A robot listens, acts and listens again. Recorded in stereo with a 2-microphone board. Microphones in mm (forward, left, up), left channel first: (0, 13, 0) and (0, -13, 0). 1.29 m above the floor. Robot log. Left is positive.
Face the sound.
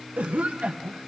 cmd yaw -90
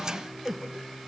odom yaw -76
note: So it is at 10° right.
cmd yaw -10
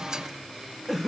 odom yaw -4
end: Found it: a cough, straight ahead.